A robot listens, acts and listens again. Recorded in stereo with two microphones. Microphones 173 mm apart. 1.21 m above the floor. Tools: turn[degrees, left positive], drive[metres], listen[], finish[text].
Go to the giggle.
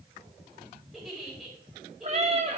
Action: turn[30]
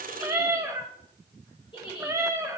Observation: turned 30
Thought: So it is at 150° left.
Action: turn[150]
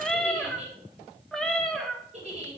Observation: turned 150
Thought: The giggle is now 45° right.
Action: turn[-45]
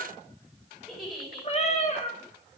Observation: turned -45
Action: drive[1.0]
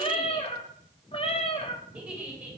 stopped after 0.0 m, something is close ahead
Thought: The giggle is now 10° right.
Action: turn[-10]
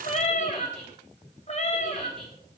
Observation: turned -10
Action: finish[Blocked. The giggle is further on, straight ahead.]